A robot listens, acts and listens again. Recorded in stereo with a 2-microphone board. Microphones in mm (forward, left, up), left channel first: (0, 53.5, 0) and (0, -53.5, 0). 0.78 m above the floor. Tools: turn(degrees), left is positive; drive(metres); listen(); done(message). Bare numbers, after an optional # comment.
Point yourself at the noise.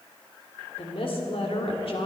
# The woman speaking: about 65° left or 115° left.
turn(65)
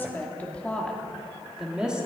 # So it is at 10° right.
turn(-10)
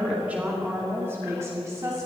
# The woman speaking is now 30° right.
turn(-30)
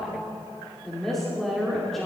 done("Facing the woman speaking, 2 to 4 m away.")